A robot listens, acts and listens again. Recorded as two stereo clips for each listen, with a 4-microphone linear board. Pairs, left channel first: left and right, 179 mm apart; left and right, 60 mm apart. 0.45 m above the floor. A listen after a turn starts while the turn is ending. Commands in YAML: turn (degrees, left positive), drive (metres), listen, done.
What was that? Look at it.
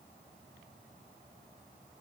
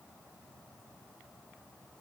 listen: true
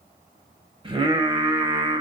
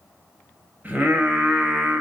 turn: -30
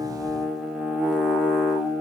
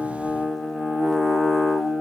done: "Facing the singing, 1 to 2 m away."